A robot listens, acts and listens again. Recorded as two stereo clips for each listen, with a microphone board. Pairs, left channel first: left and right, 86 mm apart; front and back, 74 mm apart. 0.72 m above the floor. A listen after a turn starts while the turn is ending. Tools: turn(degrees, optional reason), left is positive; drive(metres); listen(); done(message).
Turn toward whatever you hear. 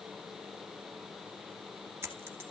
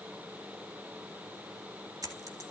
turn(degrees=-150, reason="The dropped coin: 150° right.")
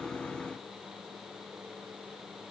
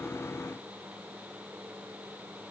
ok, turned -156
done("I heard a dropped coin from this way, but can't make it out now.")